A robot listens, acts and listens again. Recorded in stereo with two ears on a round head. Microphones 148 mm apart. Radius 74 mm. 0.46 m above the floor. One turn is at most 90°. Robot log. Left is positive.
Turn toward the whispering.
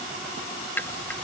cmd idle
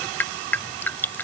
cmd idle
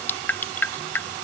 end: I can't make out whispering, only dripping.